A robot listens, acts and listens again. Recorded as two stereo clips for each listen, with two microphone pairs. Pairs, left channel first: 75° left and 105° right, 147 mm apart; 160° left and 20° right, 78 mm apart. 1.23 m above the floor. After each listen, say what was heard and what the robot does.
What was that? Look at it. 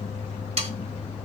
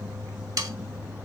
The sawing: 60° right. Turn 60° right.
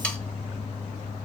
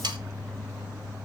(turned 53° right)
Found it: sawing, straight ahead, 1 to 2 m away.